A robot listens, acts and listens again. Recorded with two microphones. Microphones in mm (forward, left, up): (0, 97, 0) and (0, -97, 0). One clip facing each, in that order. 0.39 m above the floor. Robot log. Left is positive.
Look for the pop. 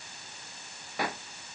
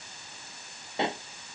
note: The pop: about 25° right or 155° right.
cmd yaw -25
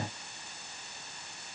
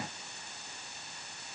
cmd idle
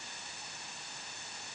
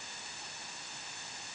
end: I heard a pop, but can't make it out now. It was about straight ahead or 130° right.